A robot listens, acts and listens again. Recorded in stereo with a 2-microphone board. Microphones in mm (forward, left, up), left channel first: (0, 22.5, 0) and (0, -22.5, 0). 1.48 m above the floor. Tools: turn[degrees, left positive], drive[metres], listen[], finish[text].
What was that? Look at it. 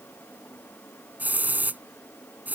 Thought: The hiss: about 40° right or 140° right.
Action: turn[-40]
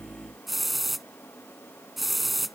Action: finish[Found it: a hiss, straight ahead.]